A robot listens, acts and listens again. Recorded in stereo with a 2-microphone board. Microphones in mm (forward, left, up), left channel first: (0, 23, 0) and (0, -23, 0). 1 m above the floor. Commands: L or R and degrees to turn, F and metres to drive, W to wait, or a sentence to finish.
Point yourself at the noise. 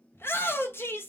L60
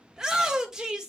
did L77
R15
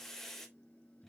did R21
L10
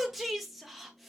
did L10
Facing the shout.